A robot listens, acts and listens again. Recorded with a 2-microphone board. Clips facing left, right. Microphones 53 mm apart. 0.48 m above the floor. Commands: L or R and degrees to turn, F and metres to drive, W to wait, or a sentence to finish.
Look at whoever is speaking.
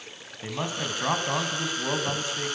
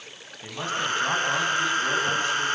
L20
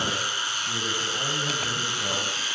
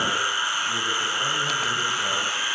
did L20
W
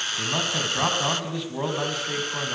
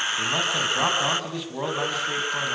Facing the man speaking, over 4 m away.